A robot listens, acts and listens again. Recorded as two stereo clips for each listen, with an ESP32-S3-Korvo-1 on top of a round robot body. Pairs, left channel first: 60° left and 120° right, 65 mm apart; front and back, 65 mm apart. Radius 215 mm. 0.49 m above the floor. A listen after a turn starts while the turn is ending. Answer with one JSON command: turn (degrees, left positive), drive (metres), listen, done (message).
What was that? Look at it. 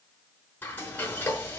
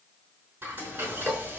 {"turn": 120}
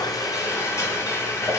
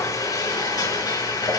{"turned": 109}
{"turn": 10}
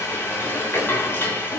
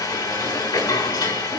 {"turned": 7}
{"done": "Found it: frying, straight ahead."}